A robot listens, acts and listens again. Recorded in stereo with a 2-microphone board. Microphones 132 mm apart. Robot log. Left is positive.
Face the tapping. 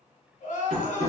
note: The tapping: about 55° right or 125° right.
cmd yaw -55
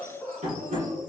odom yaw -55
note: So it is at 70° right.
cmd yaw -70
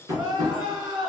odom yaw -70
note: The tapping is now 25° right.
cmd yaw -25
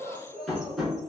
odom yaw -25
end: Facing the tapping, 1 to 2 m away.